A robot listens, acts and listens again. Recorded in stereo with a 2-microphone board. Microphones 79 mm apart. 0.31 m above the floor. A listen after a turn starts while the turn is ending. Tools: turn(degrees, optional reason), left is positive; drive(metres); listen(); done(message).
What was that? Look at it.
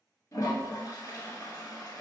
turn(degrees=50, reason="The toilet flushing: about 50° left or 130° left.")
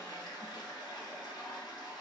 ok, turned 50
turn(degrees=80, reason="So it is at 80° left.")
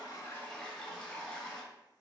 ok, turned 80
done("Found it: a toilet flushing, straight ahead.")